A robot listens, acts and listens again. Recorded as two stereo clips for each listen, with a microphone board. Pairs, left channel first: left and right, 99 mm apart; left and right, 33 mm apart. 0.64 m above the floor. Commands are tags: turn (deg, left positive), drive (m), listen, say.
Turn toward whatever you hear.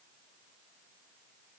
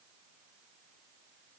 <listen/>
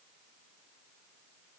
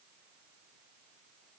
<listen/>
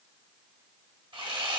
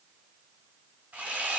<turn deg="-60"/>
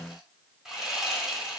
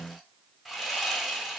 <say>Found it: sawing, straight ahead, under 1 m away.</say>